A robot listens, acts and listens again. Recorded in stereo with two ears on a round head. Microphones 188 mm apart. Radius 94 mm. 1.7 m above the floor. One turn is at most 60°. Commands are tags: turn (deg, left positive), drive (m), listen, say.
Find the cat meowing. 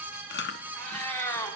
<turn deg="15"/>
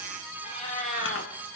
<turn deg="40"/>
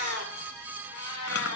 <turn deg="60"/>
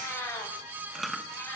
<turn deg="15"/>
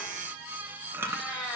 <say>Found it: a cat meowing, straight ahead, over 4 m away.</say>